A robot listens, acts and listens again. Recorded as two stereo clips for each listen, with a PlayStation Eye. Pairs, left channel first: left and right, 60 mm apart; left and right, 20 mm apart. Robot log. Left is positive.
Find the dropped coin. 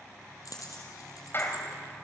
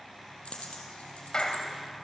cmd yaw +90
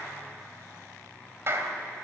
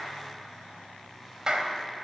end: Facing where the dropped coin came from. I can't hear it now.